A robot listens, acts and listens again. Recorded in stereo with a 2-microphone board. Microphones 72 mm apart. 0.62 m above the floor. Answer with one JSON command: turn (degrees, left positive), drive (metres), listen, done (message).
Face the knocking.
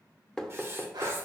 {"turn": 30}
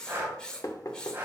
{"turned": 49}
{"turn": 125}
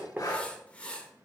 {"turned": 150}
{"turn": -25}
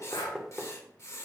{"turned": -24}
{"done": "Found it: knocking, straight ahead."}